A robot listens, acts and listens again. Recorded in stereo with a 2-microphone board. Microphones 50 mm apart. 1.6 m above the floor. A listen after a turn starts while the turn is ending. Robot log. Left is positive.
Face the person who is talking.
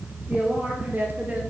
note: The woman speaking: about 30° right or 150° right.
cmd yaw -30
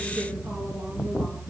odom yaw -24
cmd idle
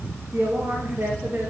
note: So it is at 125° right.
cmd yaw -125
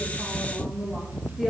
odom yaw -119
end: Found it: a woman speaking, straight ahead, 2 to 4 m away.